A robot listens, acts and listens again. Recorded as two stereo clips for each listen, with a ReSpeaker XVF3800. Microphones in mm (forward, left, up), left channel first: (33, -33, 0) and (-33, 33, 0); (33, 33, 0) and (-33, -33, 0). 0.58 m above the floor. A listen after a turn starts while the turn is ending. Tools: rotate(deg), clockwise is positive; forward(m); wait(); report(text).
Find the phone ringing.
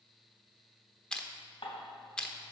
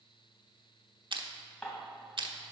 wait()
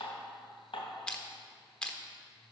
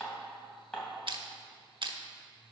wait()
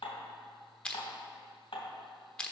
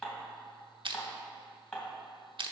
report("I can't make out a phone ringing, only crushing and dishes clattering.")